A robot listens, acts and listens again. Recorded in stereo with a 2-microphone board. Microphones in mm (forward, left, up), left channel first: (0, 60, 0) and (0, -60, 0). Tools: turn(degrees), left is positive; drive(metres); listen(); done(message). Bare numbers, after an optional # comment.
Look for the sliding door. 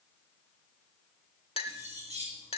listen()
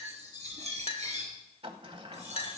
# The sliding door: about 50° right or 130° right.
turn(-50)
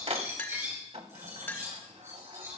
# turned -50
# So it is at 75° right.
turn(-75)
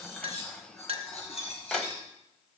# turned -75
# The sliding door is now 10° left.
turn(10)
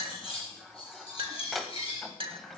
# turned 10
done("Facing the sliding door.")